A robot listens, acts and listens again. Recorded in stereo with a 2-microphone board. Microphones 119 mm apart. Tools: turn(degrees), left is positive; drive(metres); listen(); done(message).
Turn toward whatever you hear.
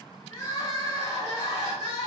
turn(degrees=45)
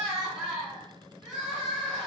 done("Facing the crying.")